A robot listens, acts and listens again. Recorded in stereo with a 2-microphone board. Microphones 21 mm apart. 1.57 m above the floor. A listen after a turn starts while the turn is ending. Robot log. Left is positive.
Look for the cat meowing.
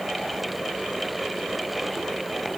cmd idle
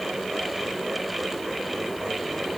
cmd idle
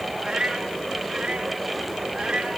note: The cat meowing: about 45° right or 135° right.
cmd yaw -45
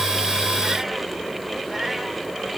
cmd idle
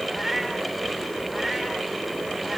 end: Facing the cat meowing.